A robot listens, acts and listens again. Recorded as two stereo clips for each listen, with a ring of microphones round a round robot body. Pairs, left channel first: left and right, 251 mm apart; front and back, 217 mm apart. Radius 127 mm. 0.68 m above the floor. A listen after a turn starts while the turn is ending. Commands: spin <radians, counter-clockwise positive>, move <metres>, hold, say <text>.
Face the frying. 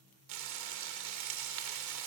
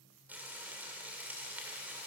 spin -1.66
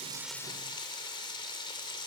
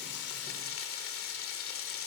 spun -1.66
spin 0.35
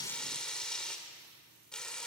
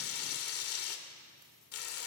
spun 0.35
say Facing the frying.